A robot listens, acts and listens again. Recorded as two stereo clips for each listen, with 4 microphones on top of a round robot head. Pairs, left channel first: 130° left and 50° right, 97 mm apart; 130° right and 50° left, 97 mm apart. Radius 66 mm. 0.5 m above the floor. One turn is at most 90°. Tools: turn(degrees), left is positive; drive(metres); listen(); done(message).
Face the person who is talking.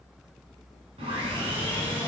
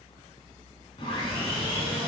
listen()
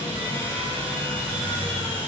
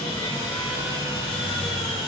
listen()
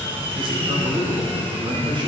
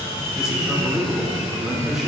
turn(degrees=-30)
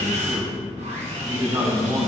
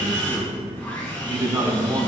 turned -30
done("Facing the man speaking, 1 to 2 m away.")